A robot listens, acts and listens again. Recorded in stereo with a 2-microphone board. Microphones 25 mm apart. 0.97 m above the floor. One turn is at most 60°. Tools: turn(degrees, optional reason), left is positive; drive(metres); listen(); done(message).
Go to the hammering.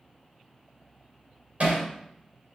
turn(degrees=-55, reason="The hammering: about 55° right or 125° right.")
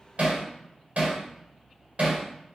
turn(degrees=-60, reason="So it is at 65° right.")
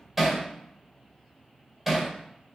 turn(degrees=-10, reason="The hammering is now 10° right.")
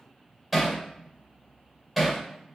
drive(metres=1.0)
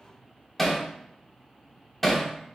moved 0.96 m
drive(metres=1.0)
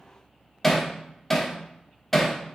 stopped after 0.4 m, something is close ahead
done("I am next to the hammering.")